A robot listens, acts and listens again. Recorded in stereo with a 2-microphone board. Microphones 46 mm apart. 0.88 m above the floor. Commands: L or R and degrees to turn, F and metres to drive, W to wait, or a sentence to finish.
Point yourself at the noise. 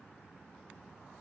W
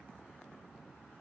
W
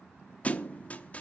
L30
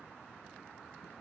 W
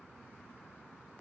I heard a thud, but can't make it out now. It was about straight ahead or 120° left.